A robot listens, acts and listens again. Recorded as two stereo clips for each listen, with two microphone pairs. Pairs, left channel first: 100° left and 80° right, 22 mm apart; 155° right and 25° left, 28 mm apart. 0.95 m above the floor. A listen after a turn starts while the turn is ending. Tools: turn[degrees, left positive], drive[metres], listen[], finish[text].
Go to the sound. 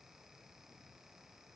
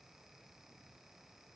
Action: listen[]
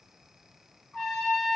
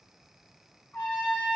Thought: The trumpet: 160° right.
Action: turn[-160]
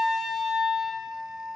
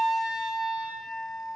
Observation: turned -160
Thought: The trumpet is now 35° right.
Action: turn[-35]
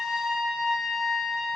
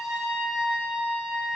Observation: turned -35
Action: drive[1.0]
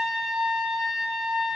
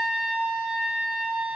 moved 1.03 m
Action: drive[1.0]
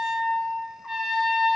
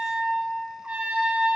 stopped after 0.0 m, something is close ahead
Action: finish[Arrived at the trumpet, straight ahead.]